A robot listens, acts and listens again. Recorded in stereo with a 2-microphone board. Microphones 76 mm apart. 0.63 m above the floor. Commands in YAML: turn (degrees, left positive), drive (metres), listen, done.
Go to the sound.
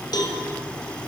turn: 65
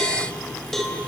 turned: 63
drive: 1.0
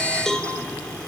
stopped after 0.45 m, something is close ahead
done: "Something is in my way. I am facing the cowbell but have not reached it."